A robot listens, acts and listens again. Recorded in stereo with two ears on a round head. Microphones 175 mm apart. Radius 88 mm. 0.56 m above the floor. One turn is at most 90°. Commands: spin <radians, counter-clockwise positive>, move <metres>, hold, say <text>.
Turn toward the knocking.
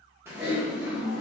hold
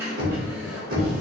spin -0.87
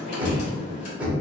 say Facing the knocking.